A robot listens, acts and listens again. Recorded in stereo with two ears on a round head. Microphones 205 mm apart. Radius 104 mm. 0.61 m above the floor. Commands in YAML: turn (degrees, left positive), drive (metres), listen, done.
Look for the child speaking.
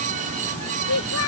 turn: 90
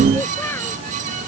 turn: 10
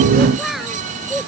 done: "Facing the child speaking."